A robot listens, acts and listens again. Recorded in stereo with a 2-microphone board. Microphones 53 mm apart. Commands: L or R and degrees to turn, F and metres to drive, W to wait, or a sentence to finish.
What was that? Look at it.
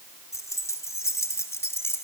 L50
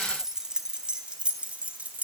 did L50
R25
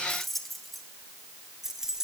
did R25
R10
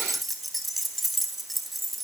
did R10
Found it: keys jangling, straight ahead.